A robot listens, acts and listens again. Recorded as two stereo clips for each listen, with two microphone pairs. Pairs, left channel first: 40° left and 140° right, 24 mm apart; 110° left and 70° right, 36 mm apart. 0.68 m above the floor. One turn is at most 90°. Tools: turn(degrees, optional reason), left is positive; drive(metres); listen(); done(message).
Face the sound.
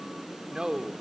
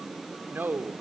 turn(degrees=-80, reason="The man speaking: 80° right.")
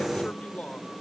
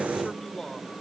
turn(degrees=30, reason="The man speaking is now 30° left.")
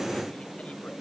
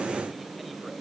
listen()
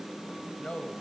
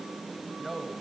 turn(degrees=20, reason="The man speaking is now 20° left.")
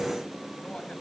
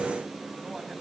listen()
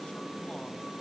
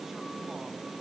listen()
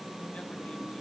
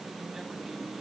done("I heard a man speaking from this way, but can't make it out now.")